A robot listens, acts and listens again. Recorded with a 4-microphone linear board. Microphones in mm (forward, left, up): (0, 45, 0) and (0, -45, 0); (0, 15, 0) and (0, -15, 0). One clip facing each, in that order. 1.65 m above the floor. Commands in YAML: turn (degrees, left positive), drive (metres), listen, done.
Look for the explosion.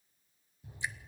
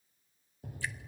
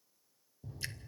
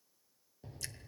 turn: -60
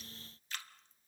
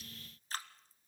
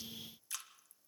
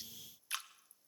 listen: true
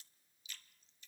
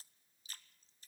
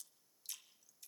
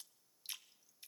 done: "I heard an explosion, but can't make it out now. It was about straight ahead or 60° right."